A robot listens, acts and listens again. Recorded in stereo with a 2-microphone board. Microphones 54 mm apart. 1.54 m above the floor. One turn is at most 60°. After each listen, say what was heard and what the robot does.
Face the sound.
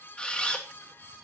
The camera shutter: about 20° left or 160° left. Turn 20° left.
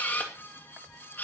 So it is at 145° left. Turn 60° left.
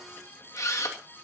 The camera shutter is now 100° left. Turn 60° left.
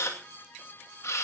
The camera shutter is now 60° left. Turn 60° left.
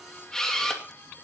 The camera shutter is now 10° left. Turn 10° left.
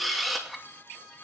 Found it: a camera shutter, straight ahead.